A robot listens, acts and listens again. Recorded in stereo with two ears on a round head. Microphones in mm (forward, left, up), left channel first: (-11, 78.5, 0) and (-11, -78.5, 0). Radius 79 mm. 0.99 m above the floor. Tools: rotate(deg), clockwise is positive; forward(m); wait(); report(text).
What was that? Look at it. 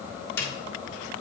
rotate(-30)
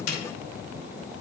rotate(-135)
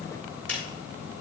report("Facing the snare drum, 2 to 4 m away.")